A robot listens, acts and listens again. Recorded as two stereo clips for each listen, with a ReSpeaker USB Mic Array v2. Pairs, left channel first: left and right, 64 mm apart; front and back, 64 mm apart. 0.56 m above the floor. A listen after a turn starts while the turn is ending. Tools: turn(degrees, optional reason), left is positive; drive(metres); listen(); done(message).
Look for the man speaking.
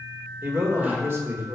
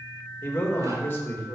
turn(degrees=-50, reason="The man speaking: 50° right.")
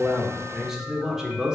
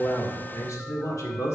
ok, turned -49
turn(degrees=-15, reason="The man speaking is now 15° right.")
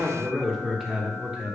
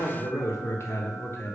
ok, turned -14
turn(degrees=-25, reason="The man speaking is now 25° right.")
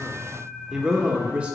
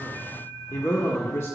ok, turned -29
turn(degrees=-30, reason="The man speaking is now 30° right.")
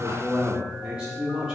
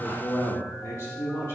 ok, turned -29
turn(degrees=-20, reason="The man speaking is now 20° right.")
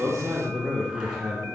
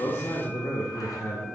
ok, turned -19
done("Facing the man speaking.")